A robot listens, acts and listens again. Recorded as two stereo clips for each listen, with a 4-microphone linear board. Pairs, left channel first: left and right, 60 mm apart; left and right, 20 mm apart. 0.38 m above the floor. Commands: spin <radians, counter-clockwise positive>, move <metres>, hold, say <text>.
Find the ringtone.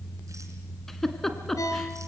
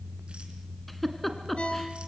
spin 1.13
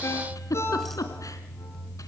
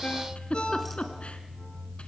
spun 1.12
spin 0.87
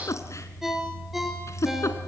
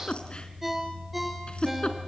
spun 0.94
say Found it: a ringtone, straight ahead, 2 to 4 m away.